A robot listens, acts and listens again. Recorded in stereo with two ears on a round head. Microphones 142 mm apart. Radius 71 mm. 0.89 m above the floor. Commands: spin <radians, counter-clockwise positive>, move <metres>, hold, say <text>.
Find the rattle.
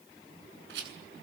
spin -1.57
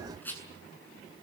spin 0.17
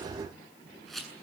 say Found it: a rattle, straight ahead, over 4 m away.